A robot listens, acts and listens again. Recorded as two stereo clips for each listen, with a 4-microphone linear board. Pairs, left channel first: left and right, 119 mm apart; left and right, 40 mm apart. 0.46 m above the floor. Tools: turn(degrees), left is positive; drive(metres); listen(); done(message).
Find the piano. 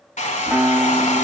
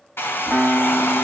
turn(degrees=30)
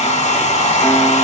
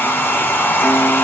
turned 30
listen()
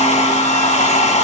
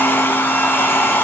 listen()
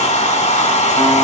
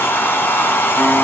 done("I heard a piano, but can't make it out now. It was about 25° right or 145° left.")